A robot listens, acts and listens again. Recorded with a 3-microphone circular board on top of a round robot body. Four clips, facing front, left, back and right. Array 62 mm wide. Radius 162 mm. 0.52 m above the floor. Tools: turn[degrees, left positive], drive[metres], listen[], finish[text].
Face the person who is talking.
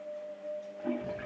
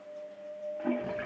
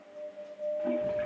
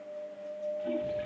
Action: listen[]
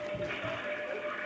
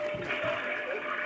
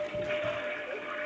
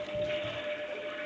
Action: listen[]
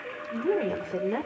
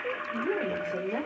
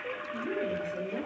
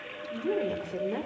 Action: finish[Facing the woman speaking, 2 to 4 m away.]